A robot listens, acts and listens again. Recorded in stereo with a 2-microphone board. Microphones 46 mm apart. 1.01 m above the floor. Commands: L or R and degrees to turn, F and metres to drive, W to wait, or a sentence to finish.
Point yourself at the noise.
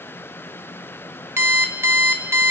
R65
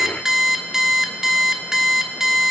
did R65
R10
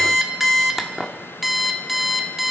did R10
Facing the alarm clock, 1 to 2 m away.